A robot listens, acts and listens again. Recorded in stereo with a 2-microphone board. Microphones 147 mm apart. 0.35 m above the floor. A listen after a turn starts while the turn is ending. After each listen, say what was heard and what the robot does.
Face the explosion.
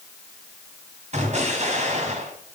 The explosion: about 55° right or 125° right. Turn 55° right.
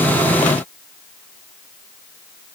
Keep listening.
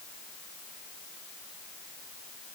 I heard an explosion, but can't make it out now. It was about straight ahead or 70° right.